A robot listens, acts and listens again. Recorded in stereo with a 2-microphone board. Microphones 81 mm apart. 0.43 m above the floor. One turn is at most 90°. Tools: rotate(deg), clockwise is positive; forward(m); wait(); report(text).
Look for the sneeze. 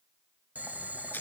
wait()
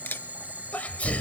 rotate(-20)
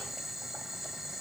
wait()
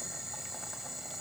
report("I heard a sneeze, but can't make it out now. It was about straight ahead or 140° left.")